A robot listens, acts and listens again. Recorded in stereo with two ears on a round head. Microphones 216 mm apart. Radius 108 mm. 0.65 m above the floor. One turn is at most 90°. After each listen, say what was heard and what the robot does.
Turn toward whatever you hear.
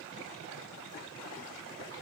Keep listening.
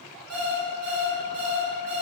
Turn 30° left.
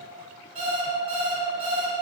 So it is at 25° right. Turn 25° right.
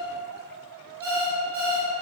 Found it: an alarm clock, straight ahead.